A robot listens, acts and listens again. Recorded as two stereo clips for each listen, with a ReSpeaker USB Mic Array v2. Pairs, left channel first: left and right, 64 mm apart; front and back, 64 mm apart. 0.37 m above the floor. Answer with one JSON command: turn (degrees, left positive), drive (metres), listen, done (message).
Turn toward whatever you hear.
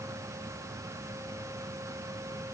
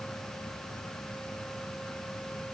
{"listen": true}
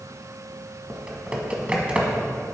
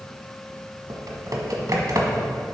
{"turn": -160}
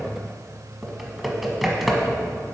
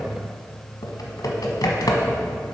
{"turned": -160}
{"done": "Facing the typing on a keyboard."}